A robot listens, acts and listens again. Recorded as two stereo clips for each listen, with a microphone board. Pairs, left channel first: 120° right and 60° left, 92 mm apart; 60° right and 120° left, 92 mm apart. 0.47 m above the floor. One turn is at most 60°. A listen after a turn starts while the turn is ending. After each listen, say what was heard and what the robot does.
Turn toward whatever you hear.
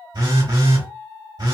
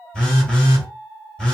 The phone buzzing: 25° left. Turn 25° left.
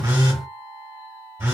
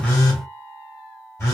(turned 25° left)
Found it: a phone buzzing, straight ahead, 1 to 2 m away.